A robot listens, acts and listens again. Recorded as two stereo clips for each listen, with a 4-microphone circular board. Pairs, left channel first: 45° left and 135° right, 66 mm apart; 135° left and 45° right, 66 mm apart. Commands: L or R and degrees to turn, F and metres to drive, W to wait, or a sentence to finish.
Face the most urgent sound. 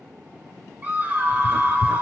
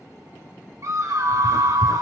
R70
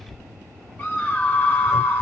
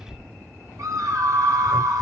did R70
R20
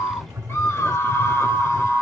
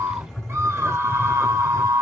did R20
Found it: a scream, straight ahead, 1 to 2 m away.